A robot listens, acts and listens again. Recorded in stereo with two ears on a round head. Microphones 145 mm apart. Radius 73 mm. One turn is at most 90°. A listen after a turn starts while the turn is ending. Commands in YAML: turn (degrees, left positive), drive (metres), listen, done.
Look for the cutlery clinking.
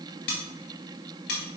turn: 75
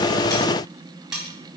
done: "Found it: cutlery clinking, straight ahead."